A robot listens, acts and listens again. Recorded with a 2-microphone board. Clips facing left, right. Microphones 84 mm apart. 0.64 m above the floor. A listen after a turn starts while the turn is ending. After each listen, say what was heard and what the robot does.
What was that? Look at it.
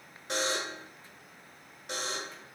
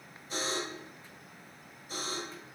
Turn 90° left.
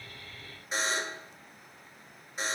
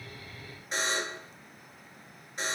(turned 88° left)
Found it: a buzzer, straight ahead.